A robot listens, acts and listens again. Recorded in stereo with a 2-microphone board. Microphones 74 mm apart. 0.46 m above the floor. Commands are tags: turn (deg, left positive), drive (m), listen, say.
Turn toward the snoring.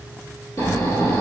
<turn deg="45"/>
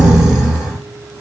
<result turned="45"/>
<say>Found it: snoring, straight ahead.</say>